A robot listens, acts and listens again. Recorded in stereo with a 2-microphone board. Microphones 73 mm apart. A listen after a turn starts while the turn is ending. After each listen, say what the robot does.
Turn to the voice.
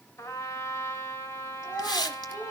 Turn 45° left.
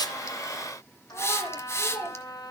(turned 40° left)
Facing the child speaking.